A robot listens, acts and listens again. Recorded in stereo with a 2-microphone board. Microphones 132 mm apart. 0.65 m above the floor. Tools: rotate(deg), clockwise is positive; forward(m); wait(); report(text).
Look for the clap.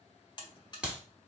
rotate(30)
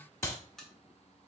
rotate(-20)
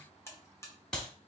report("Facing the clap.")